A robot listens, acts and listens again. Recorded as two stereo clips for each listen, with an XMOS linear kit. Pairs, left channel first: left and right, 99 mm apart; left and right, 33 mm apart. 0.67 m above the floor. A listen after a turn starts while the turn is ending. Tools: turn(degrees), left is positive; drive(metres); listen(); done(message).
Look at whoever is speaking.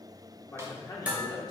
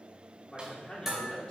turn(degrees=40)
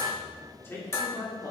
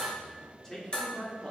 turn(degrees=35)
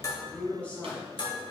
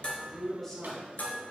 turn(degrees=15)
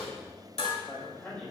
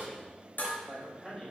turn(degrees=15)
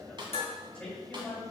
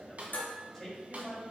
turn(degrees=10)
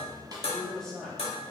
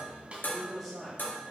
done("Found it: a man speaking, straight ahead, 2 to 4 m away.")